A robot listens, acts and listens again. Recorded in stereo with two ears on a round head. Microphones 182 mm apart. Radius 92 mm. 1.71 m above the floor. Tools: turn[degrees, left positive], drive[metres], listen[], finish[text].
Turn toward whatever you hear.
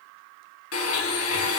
Action: turn[90]
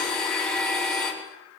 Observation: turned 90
Action: finish[Facing the blender, over 4 m away.]